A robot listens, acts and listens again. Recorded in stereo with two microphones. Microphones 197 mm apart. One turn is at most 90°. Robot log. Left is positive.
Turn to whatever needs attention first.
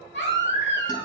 note: The baby crying: about 70° left or 110° left.
cmd yaw +70
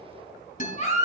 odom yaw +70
note: So it is at 40° left.
cmd yaw +40
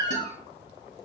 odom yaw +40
note: The baby crying is now 15° left.
cmd yaw +15
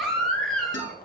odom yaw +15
end: Facing the baby crying.